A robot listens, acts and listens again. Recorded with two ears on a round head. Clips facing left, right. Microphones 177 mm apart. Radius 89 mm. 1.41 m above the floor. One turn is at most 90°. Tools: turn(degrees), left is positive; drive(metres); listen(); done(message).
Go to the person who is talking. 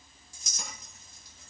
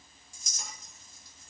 listen()
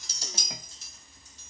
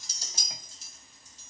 listen()
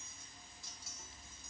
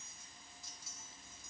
done("I can't make out anyone speaking to turn to.")